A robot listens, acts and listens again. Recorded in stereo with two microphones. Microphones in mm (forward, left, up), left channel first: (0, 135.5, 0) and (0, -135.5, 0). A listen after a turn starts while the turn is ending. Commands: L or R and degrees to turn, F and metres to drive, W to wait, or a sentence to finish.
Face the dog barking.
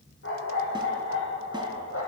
L50
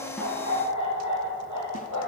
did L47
L80
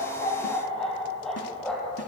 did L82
Found it: a dog barking, straight ahead.